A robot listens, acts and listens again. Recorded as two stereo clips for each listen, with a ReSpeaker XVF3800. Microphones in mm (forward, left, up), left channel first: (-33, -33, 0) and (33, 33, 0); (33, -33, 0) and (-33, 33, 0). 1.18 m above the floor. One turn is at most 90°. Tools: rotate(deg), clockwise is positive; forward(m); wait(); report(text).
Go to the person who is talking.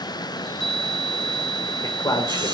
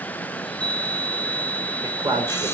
rotate(-90)
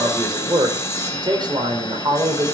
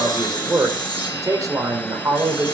rotate(-85)
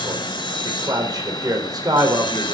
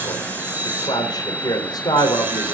forward(1.0)
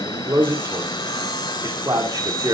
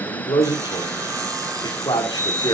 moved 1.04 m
forward(1.0)
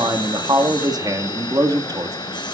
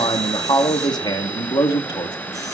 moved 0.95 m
forward(1.0)
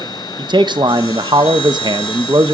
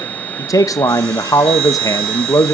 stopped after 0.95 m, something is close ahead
rotate(-10)
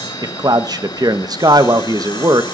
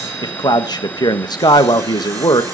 report("I am next to the man speaking.")